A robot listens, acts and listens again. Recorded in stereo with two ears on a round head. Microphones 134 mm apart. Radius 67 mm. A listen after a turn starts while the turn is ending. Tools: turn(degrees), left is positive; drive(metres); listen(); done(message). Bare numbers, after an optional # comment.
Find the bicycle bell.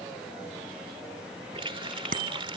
# The bicycle bell: about 60° right or 120° right.
turn(-60)
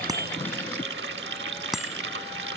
done("Facing the bicycle bell.")